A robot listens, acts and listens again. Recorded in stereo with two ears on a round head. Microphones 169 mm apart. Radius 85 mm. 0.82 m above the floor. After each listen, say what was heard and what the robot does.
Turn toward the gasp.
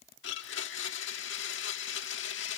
Keep listening.
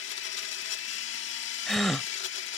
Turn 30° left.
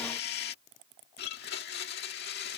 Keep listening.
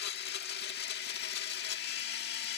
I heard a gasp, but can't make it out now. It was about 30° right or 150° left.